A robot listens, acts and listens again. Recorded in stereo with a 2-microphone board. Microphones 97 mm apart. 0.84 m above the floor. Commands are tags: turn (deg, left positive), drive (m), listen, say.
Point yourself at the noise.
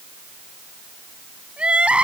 <turn deg="-30"/>
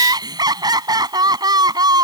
<turn deg="-140"/>
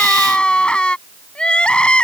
<turn deg="10"/>
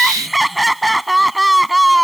<say>Facing the crying.</say>